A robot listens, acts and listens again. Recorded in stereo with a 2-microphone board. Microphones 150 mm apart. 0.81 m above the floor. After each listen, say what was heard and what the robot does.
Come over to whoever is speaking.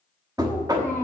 The child speaking: about 15° left or 165° left. Turn 15° left.
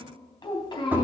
So it is at 150° left. Turn 150° left.
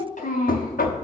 The child speaking is now 60° left. Turn 60° left.
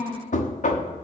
The child speaking is now 15° left. Turn 15° left.
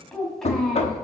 Drive 1.0 m forward.
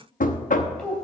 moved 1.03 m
Drive 1.0 m forward.
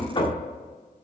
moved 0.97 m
Keep listening.
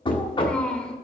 Drive 1.0 m forward.
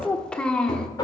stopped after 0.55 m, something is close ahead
I am next to the child speaking.